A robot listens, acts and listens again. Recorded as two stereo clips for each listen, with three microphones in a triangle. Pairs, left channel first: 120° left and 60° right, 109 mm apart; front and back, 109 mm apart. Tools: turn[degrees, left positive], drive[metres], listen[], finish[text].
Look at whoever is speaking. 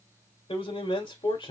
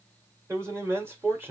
Thought: The man speaking: 120° left.
Action: turn[120]
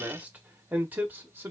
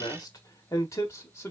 Thought: The man speaking is now 25° right.
Action: turn[-25]
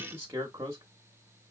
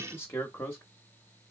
Thought: The man speaking is now 45° right.
Action: turn[-45]
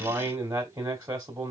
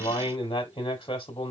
Thought: The man speaking is now 10° right.
Action: turn[-10]
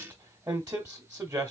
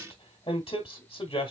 Action: finish[Found it: a man speaking, straight ahead, 1 to 2 m away.]